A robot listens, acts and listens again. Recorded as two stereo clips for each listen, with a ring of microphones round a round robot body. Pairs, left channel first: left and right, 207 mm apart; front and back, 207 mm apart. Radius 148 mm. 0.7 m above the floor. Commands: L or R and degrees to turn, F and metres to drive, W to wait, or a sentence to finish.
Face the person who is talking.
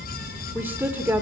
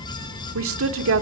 R175
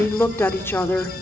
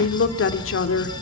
L10
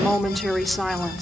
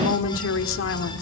Facing the woman speaking, 1 to 2 m away.